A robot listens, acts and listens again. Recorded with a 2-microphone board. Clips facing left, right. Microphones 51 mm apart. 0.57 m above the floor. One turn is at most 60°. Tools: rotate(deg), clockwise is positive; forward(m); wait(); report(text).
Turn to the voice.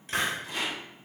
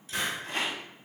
wait()
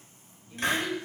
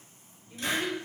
rotate(55)
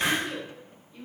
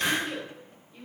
rotate(10)
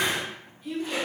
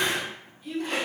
report("Found it: a child speaking, straight ahead, 1 to 2 m away.")